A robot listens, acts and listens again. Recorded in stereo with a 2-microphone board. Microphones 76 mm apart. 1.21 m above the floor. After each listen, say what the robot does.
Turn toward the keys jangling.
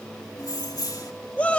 Turn 60° left.
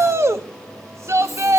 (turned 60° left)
Keep listening.
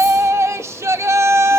Keep listening.
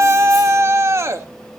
I heard keys jangling, but can't make it out now. It was about straight ahead or 60° left.